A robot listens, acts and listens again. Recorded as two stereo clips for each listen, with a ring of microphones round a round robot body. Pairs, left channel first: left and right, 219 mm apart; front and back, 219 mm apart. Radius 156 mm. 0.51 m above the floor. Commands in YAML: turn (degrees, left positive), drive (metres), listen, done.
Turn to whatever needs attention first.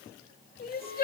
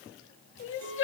turn: 35
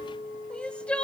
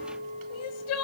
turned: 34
done: "Facing the crying, under 1 m away."